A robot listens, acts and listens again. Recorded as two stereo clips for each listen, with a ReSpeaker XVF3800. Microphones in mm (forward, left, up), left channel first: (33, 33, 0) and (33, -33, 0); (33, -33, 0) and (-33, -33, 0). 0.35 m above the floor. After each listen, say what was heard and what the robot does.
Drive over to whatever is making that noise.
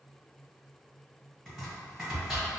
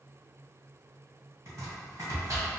The chopping: straight behind. Turn 180° left.
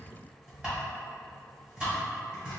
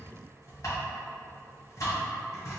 The chopping is now 20° right. Turn 20° right.
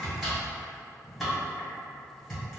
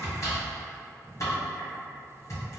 Drive 1.0 m forward.
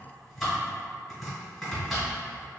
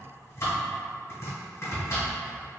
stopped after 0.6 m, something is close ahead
I am next to the chopping.